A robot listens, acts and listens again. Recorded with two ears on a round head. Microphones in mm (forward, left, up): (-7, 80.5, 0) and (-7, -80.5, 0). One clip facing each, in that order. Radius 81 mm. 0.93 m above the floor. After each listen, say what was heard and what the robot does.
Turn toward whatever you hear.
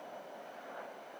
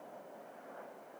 Keep listening.
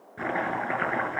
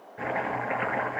The chopping: about 55° left or 125° left. Turn 55° left.
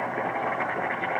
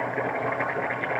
Found it: chopping, straight ahead.